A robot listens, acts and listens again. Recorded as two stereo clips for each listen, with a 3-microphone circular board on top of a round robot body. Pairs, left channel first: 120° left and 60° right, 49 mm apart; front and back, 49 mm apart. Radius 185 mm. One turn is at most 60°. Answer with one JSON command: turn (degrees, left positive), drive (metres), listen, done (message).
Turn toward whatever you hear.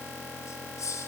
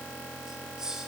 {"turn": 60}
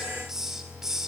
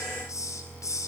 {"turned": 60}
{"turn": 20}
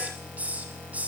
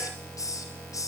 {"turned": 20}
{"done": "Facing the hiss."}